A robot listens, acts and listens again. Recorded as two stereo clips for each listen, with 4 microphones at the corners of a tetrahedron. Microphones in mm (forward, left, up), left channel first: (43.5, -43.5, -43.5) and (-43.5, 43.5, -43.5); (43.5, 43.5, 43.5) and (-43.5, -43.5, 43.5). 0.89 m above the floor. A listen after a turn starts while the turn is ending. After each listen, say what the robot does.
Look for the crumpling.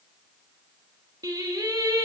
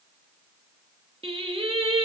Keep listening.
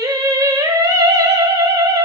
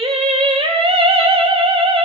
Keep listening.
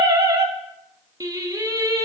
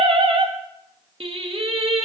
I can't make out crumpling, only singing.